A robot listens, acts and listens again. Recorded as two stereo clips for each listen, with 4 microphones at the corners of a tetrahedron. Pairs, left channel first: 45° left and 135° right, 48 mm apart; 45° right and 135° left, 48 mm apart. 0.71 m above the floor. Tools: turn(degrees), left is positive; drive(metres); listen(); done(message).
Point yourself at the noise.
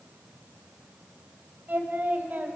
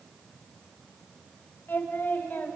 turn(degrees=-90)
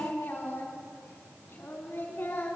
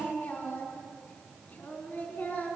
done("Facing the singing, over 4 m away.")